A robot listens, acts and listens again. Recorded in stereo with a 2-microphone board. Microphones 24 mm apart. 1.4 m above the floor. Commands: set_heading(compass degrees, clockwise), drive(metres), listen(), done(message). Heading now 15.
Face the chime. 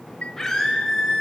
set_heading(285)
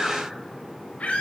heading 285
listen()
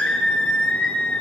listen()
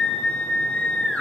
done("I heard a chime from this way, but can't make it out now.")